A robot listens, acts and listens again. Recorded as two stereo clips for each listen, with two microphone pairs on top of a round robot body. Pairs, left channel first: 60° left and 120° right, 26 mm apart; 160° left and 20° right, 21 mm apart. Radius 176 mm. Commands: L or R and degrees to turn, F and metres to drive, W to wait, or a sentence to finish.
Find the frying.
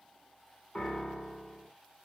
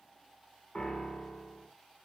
W
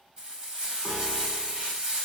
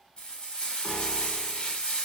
R175
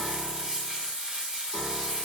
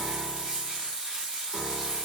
R65
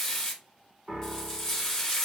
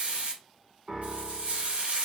R10
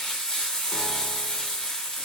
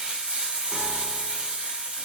Found it: frying, straight ahead, 1 to 2 m away.